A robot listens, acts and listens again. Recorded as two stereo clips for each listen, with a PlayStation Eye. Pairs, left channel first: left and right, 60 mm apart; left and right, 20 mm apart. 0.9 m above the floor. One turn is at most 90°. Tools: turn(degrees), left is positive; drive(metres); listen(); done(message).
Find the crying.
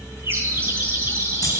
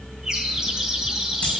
listen()
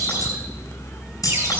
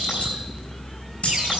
listen()
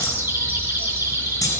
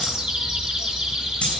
done("I can't make out crying to turn to.")